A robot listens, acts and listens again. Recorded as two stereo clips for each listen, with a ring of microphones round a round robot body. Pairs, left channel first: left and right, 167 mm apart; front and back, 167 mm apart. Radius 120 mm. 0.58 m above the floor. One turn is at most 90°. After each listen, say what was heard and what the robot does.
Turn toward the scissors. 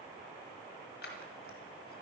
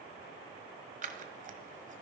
The scissors: 140° left. Turn 90° left.
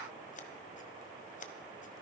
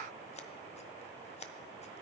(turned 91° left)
The scissors is now 50° left. Turn 50° left.
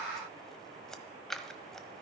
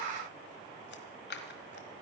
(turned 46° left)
Found it: scissors, straight ahead.